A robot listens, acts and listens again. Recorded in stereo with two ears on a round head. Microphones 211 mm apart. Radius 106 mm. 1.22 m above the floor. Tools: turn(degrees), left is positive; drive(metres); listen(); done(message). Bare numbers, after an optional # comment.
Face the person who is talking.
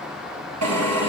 listen()
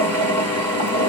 listen()
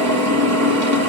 done("I can't make out anyone speaking, only a drill.")